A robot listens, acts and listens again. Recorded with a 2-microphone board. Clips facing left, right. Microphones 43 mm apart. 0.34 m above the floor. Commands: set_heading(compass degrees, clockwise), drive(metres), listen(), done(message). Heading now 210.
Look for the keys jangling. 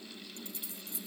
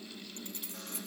set_heading(265)
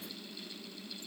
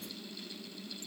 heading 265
listen()
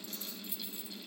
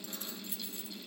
set_heading(320)
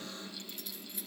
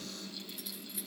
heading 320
done("Found it: keys jangling, straight ahead.")